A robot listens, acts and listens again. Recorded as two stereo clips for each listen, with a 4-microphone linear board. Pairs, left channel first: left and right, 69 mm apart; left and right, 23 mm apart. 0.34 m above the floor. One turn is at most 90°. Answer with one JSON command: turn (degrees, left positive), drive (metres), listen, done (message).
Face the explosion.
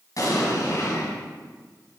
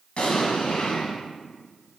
{"turn": 60}
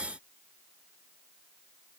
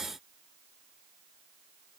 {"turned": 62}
{"listen": true}
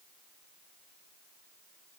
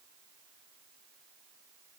{"done": "I heard an explosion, but can't make it out now. It was about straight ahead or 60° left."}